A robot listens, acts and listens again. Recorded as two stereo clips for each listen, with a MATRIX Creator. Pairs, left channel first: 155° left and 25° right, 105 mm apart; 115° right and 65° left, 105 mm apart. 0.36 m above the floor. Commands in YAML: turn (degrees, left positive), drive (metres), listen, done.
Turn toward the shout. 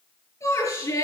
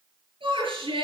turn: 100
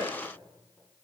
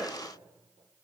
listen: true
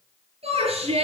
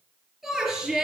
turn: -15
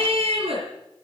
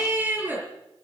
done: "Found it: a shout, straight ahead."